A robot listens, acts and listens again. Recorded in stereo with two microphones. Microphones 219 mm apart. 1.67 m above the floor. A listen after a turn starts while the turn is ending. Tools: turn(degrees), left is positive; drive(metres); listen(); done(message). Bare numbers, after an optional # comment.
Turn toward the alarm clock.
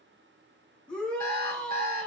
# The alarm clock: about 40° right or 140° right.
turn(-40)
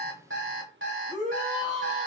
# So it is at 95° right.
turn(-95)
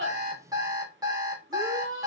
# The alarm clock is now 20° right.
turn(-20)
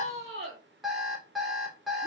done("Facing the alarm clock, 2 to 4 m away.")